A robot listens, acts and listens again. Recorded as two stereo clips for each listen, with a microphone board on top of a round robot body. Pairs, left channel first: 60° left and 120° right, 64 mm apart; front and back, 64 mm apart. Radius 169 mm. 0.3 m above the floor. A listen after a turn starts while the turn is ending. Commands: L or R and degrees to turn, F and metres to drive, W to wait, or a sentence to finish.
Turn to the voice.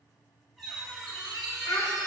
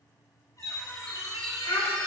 L20
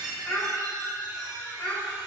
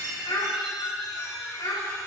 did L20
Found it: a child speaking, straight ahead, 1 to 2 m away.